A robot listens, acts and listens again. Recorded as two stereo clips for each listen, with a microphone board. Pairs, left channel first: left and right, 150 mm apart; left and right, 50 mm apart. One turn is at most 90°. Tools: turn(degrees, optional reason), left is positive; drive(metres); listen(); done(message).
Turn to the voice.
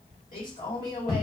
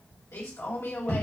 turn(degrees=65, reason="The man speaking: about 65° left or 115° left.")
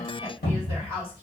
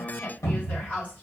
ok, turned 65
turn(degrees=40, reason="So it is at 40° left.")
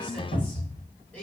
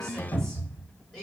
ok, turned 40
turn(degrees=10, reason="The man speaking is now 10° left.")
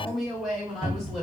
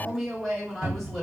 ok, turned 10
done("Found it: a man speaking, straight ahead.")